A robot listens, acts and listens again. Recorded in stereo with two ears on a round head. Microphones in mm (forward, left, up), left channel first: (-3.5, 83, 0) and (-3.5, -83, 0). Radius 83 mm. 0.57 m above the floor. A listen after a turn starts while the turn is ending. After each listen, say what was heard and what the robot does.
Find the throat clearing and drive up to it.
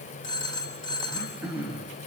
Turn 30° right.
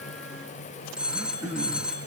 So it is at 140° right. Turn 140° right.
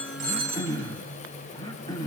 The throat clearing is now 20° left. Turn 20° left.
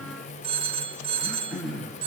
Drive 1.0 m forward.
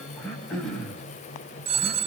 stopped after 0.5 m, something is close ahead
Blocked. The throat clearing is further on, straight ahead.